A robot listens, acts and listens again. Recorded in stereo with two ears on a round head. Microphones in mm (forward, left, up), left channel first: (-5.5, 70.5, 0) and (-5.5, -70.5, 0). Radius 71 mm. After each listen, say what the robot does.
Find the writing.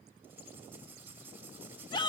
Turn 30° right.
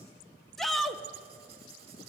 Keep listening.
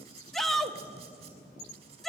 Turn 140° right.
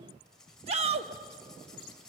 Facing the writing, over 4 m away.